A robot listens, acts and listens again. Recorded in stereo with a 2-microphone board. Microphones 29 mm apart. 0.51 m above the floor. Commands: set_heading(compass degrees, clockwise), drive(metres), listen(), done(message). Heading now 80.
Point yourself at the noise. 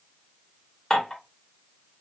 set_heading(50)
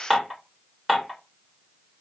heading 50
set_heading(65)
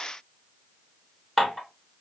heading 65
done("Facing the dishes clattering, 1 to 2 m away.")